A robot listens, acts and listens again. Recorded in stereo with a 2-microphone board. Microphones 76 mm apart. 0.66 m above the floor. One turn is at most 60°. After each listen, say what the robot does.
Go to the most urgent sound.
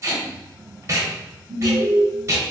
Turn 30° left.
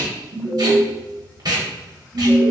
Turn 15° right.
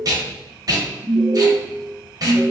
Drive 1.0 m forward.
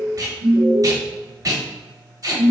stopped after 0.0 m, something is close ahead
Something is in my way. I am facing the alarm but have not reached it.